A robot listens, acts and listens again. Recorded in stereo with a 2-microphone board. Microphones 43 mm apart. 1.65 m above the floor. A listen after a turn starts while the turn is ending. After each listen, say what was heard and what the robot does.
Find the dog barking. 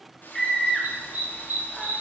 The dog barking: about 40° right or 140° right. Turn 40° right.
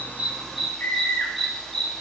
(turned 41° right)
Found it: a dog barking, straight ahead, 1 to 2 m away.